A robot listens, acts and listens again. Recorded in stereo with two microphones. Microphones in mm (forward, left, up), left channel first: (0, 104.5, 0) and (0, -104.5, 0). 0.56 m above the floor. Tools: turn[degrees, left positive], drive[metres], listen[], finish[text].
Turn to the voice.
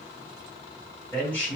Action: turn[30]
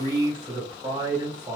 Thought: So it is at 25° right.
Action: turn[-25]
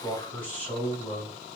Thought: The man speaking is now 10° left.
Action: turn[10]
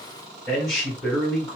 Action: finish[Found it: a man speaking, straight ahead.]